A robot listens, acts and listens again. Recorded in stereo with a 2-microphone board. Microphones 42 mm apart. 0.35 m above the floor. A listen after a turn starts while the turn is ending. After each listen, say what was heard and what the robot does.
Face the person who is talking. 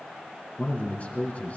The man speaking: about 40° left or 140° left. Turn 40° left.
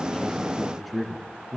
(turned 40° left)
Facing the man speaking.